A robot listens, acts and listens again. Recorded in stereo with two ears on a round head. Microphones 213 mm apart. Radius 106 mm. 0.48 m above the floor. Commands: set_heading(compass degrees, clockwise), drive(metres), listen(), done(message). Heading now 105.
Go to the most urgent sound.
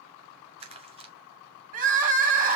set_heading(140)
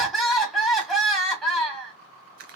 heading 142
drive(1.0)
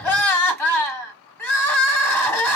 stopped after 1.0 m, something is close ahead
set_heading(132)
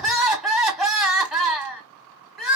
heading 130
done("I am next to the crying.")